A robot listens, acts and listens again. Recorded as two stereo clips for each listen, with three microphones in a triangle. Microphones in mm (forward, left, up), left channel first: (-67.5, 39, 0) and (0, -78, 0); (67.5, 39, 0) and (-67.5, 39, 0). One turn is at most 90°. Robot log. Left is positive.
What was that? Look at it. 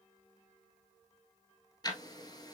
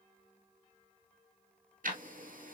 note: The ticking: straight behind.
cmd yaw +90
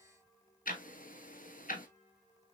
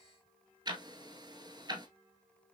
note: The ticking is now 120° left.
cmd yaw +90
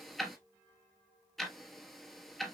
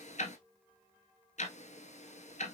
note: The ticking is now 30° left.
cmd yaw +30
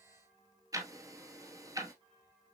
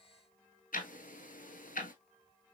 end: Facing the ticking.